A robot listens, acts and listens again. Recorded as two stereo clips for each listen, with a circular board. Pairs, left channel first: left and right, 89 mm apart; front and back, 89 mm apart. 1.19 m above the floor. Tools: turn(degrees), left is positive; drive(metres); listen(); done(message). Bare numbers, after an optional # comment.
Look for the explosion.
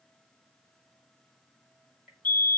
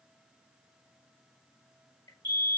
listen()
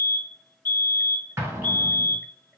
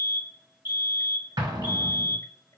# The explosion: 150° right.
turn(-150)
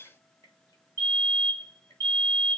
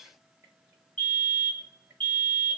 done("I heard an explosion from this way, but can't make it out now.")